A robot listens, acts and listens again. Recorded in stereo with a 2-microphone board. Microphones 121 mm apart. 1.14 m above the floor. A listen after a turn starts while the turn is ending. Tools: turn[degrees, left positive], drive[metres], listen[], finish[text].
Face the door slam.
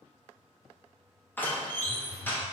Thought: The door slam: about 15° left or 165° left.
Action: turn[15]
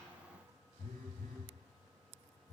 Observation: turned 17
Action: listen[]
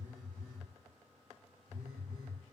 Action: finish[I heard a door slam, but can't make it out now. It was about straight ahead or 150° left.]